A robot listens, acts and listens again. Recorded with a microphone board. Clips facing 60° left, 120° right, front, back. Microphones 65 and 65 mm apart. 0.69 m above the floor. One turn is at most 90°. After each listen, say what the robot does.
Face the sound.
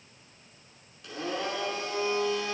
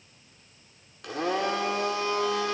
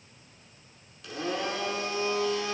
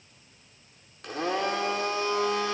Turn 90° right.
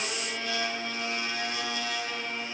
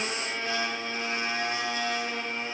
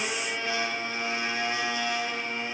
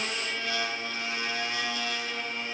Turn 65° right.
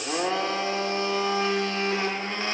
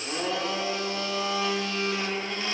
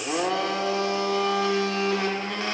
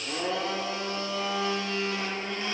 Turn 10° left.
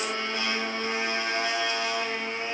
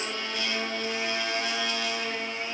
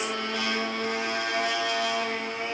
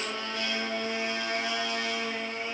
Found it: a blender, straight ahead, under 1 m away.